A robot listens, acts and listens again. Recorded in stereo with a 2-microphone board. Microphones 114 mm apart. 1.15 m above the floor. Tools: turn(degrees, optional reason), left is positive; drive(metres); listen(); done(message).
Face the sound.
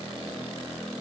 listen()
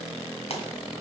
turn(degrees=60, reason="The pop: about 60° left or 120° left.")
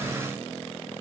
listen()
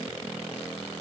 done("I heard a pop, but can't make it out now. It was about straight ahead or 60° left.")